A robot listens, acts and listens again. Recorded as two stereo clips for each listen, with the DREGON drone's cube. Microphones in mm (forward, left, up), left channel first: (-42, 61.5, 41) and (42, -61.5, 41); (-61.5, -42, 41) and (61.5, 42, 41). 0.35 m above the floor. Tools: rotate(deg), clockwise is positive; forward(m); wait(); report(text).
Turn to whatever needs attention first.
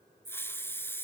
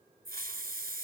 wait()
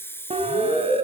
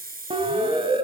rotate(15)
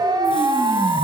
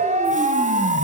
report("Found it: a siren, straight ahead.")